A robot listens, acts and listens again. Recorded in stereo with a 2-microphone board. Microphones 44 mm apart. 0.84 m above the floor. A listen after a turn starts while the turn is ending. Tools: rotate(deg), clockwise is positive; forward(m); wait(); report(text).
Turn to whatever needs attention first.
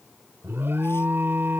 rotate(65)
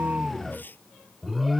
report("Facing the alarm.")